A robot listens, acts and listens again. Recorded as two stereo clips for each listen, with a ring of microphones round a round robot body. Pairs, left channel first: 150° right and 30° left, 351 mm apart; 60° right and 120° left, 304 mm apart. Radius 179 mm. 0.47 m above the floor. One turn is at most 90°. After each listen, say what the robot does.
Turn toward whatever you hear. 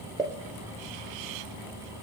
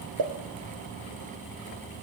Turn 90° left.
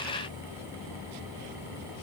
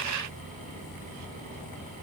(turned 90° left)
Turn 20° left.
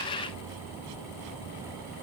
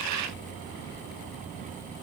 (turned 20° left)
Facing where the pop came from. I can't hear it now.